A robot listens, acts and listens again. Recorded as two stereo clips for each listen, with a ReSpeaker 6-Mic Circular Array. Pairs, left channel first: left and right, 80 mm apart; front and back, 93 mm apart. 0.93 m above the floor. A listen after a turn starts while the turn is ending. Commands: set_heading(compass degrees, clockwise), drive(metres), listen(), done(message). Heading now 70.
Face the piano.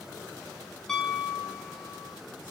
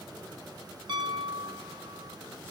set_heading(255)
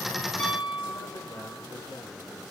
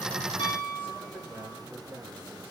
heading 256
done("Found it: a piano, straight ahead, 1 to 2 m away.")